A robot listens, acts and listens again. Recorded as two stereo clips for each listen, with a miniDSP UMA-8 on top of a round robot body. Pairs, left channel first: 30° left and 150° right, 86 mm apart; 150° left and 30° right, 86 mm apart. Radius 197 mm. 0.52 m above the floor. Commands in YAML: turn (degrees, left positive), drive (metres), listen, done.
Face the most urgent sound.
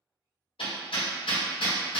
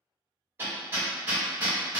listen: true
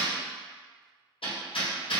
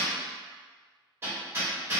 listen: true
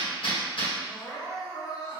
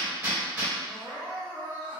turn: 85
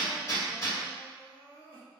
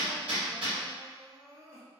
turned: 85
turn: 30
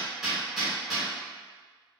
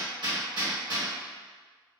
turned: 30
listen: true
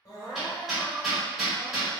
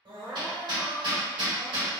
turn: -10
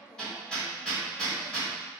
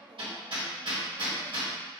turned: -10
done: "Facing the crying."